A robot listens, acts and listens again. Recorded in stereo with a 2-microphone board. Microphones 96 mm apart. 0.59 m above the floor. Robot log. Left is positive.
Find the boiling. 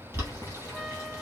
note: The boiling: about 25° right or 155° right.
cmd yaw -25
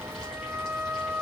cmd idle
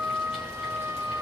cmd idle
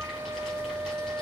end: I heard boiling, but can't make it out now. It was about straight ahead or 130° right.